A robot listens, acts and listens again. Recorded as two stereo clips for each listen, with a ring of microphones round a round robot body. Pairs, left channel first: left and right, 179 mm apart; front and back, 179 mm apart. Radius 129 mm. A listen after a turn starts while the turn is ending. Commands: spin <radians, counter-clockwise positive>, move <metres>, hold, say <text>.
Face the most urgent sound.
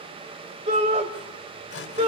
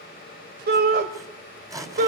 spin -2.53
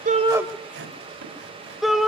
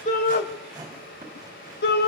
say Found it: a shout, straight ahead.